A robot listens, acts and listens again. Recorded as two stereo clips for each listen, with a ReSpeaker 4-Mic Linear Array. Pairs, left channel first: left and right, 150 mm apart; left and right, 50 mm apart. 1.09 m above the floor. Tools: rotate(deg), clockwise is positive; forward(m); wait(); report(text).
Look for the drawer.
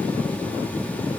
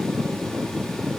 wait()
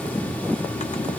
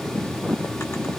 wait()
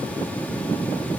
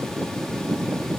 report("I can't make out a drawer.")